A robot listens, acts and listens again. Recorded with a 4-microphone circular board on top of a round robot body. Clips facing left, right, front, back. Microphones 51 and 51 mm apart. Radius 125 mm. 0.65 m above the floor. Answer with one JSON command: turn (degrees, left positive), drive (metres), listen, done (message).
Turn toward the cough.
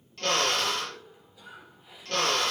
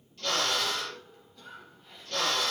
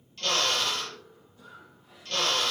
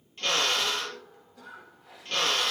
{"turn": 170}
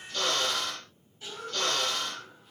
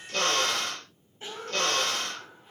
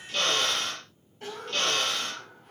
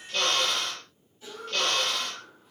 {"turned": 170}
{"turn": -35}
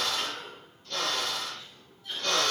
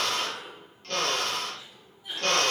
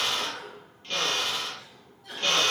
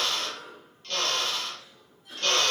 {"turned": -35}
{"turn": -15}
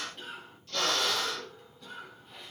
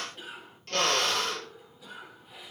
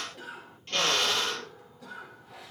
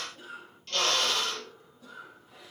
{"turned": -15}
{"done": "Facing the cough."}